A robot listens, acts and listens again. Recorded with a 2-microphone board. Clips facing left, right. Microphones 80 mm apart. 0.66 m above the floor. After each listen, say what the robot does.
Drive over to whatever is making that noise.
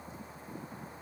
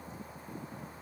Keep listening.
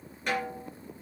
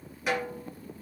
Turn 30° right.
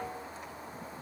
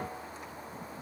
Keep listening.
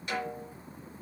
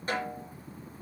Turn 145° right.
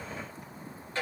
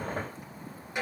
Turn 15° right.
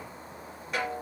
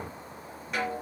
Drive 1.0 m forward.
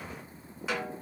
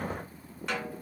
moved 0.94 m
Drive 1.0 m forward.
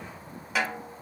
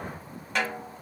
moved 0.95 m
Drive 1.0 m forward.
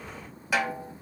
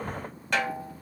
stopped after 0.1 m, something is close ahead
Arrived at the snare drum, straight ahead.